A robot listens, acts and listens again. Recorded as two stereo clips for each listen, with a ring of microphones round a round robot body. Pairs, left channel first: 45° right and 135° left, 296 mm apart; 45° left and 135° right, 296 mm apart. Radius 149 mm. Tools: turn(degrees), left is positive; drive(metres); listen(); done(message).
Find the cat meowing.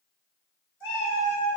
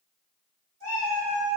turn(degrees=-60)
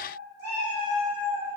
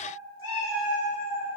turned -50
done("Found it: a cat meowing, straight ahead, 2 to 4 m away.")